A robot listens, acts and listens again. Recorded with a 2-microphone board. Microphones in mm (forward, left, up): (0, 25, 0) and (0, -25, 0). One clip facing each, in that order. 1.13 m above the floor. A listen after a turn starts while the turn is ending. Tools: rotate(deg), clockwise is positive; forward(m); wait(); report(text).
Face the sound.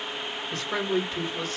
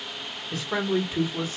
rotate(30)
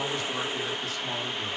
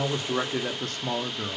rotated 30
rotate(125)
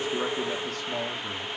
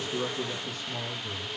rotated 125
rotate(-65)
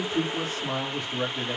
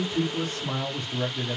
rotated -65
rotate(-10)
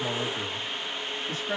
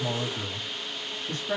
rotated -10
report("Found it: a man speaking, straight ahead, 1 to 2 m away.")